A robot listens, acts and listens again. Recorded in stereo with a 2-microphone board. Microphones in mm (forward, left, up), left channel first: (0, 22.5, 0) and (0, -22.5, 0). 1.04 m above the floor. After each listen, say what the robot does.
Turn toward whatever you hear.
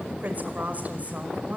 Turn 35° right.
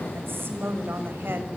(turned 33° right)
Turn 120° right.
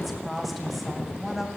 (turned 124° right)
Found it: a woman speaking, straight ahead.